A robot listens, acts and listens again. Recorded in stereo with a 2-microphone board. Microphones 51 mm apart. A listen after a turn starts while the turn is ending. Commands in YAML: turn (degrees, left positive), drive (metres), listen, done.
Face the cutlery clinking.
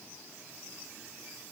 listen: true
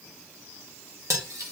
turn: -90
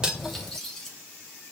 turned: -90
turn: 15
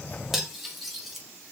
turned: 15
done: "Found it: cutlery clinking, straight ahead, 1 to 2 m away."